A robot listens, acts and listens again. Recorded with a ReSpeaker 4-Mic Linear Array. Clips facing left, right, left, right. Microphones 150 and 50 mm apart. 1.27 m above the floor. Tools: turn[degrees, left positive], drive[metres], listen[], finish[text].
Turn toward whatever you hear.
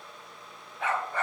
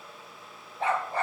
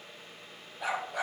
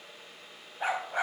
Thought: The dog barking: about 30° right or 150° right.
Action: turn[-30]
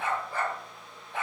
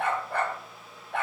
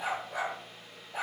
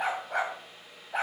Thought: So it is at 120° right.
Action: turn[-120]
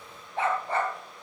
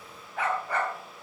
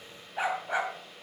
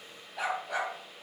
Thought: The dog barking is now 30° left.
Action: turn[30]
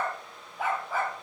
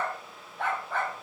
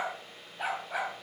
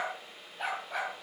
Action: finish[Found it: a dog barking, straight ahead.]